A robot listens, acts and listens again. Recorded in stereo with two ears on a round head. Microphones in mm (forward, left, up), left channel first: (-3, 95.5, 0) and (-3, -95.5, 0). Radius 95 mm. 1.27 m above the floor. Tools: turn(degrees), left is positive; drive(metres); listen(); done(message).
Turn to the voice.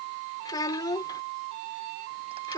turn(degrees=20)
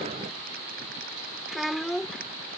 done("Facing the child speaking.")